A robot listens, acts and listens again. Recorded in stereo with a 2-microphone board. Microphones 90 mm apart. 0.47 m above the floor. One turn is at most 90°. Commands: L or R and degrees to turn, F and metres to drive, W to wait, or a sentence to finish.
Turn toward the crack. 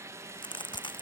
L65
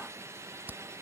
W
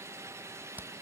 I heard a crack, but can't make it out now. It was about straight ahead or 50° left.